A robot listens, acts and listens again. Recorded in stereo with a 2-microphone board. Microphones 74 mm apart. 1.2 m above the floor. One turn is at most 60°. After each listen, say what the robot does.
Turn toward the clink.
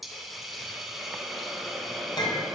Turn 60° left.
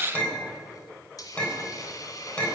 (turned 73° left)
Turn 15° left.
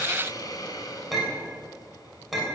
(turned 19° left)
Found it: a clink, straight ahead.